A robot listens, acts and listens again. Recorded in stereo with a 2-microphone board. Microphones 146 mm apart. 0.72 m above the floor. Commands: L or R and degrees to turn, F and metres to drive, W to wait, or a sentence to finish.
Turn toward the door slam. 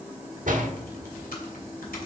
R60
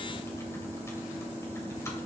W
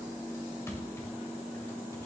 I heard a door slam, but can't make it out now. It was about straight ahead or 60° right.